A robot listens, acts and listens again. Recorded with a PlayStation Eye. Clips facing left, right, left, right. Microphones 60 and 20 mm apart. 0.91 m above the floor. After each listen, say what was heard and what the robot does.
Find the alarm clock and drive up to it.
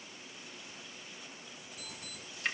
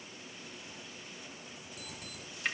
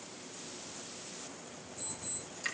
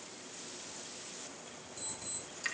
Turn 90° right.
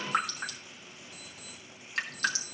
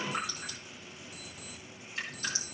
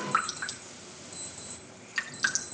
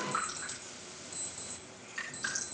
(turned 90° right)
So it is at 15° right. Turn 15° right.
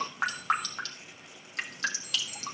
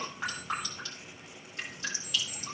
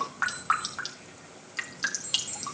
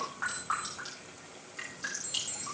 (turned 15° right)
Drive 1.0 m forward.
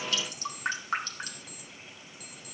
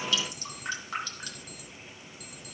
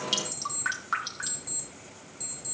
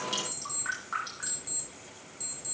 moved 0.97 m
Drive 1.0 m forward.
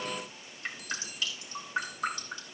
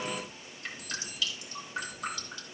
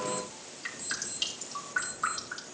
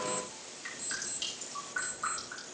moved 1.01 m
Drive 1.0 m forward.
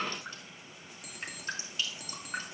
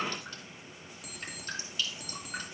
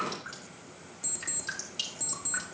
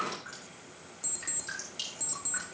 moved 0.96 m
Drive 1.0 m forward.
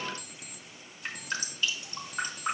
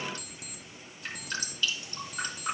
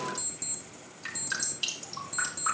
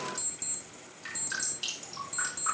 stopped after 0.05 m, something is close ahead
Arrived at the alarm clock, straight ahead.